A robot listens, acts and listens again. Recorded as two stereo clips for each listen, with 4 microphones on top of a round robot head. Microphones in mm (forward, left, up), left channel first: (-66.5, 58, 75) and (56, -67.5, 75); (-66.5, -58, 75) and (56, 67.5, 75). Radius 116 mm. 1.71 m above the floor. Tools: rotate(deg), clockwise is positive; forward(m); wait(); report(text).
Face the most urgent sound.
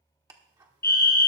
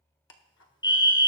rotate(-160)
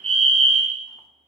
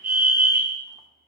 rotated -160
rotate(-10)
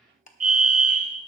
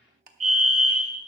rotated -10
report("Facing the fire alarm, 1 to 2 m away.")